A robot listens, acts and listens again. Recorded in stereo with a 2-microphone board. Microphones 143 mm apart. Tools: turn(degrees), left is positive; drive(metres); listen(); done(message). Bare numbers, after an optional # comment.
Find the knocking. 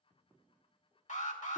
listen()
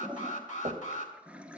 # The knocking: about 45° right or 135° right.
turn(-45)
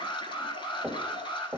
# So it is at 10° right.
turn(-10)
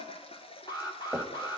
done("Found it: knocking, straight ahead.")